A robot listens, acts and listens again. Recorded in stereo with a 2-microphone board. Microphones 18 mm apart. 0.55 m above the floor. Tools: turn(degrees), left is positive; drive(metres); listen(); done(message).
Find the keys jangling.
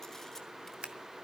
listen()
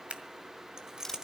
turn(degrees=-35)
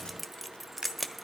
done("Found it: keys jangling, straight ahead, 1 to 2 m away.")